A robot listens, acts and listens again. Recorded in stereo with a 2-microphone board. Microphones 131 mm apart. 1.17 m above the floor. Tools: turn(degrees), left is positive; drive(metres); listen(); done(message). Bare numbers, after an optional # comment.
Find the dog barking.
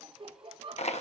listen()
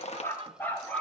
turn(30)
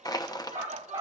# So it is at 30° right.
turn(-30)
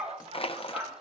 # The dog barking is now 20° right.
turn(-20)
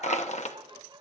listen()
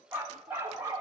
# The dog barking is now 25° right.
turn(-25)
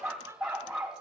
# The dog barking is now 10° right.
turn(-10)
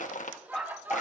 done("Facing the dog barking.")